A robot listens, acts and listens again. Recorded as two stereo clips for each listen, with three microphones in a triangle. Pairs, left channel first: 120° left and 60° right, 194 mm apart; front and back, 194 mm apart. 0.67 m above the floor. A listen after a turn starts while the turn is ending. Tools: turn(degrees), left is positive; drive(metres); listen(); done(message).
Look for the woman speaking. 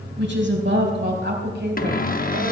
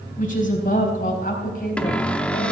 turn(degrees=-40)
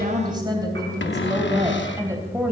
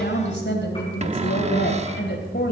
turn(degrees=15)
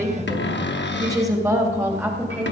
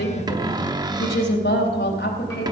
turn(degrees=20)
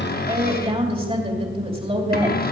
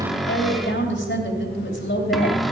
done("Facing the woman speaking, 2 to 4 m away.")